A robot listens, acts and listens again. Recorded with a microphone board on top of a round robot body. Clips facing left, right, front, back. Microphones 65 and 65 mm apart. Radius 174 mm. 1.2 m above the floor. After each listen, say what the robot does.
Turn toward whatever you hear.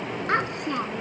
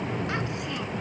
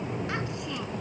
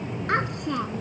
Turn 135° left.
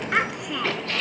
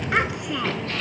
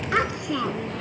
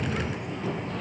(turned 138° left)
Found it: a child speaking, straight ahead.